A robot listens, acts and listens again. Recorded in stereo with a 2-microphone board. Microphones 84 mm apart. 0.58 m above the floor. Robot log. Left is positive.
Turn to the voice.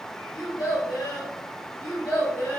note: The child speaking: about 30° left or 150° left.
cmd yaw +30
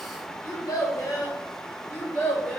note: The child speaking: about 20° left or 160° left.
cmd yaw +20
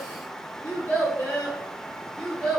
cmd yaw +30
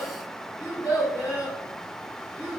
note: So it is at 140° left.
cmd yaw +140
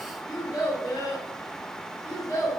note: The child speaking is now 40° left.
cmd yaw +40
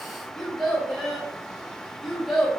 end: Found it: a child speaking, straight ahead.